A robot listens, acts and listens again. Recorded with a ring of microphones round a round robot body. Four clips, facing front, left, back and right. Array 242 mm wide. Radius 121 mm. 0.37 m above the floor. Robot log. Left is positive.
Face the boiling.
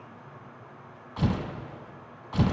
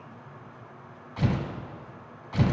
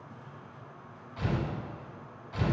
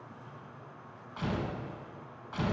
cmd idle
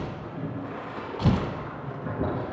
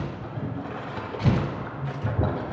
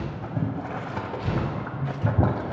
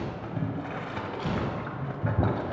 note: The boiling: 165° right.
cmd yaw -165
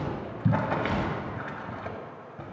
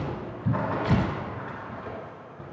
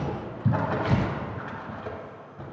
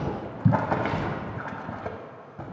note: The boiling is now 75° right.
cmd yaw -75
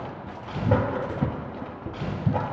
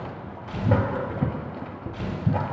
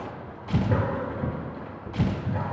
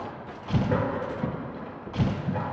note: The boiling is now 40° left.
cmd yaw +40
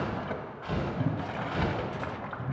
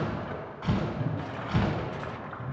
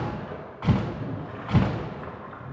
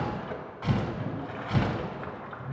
end: Facing the boiling.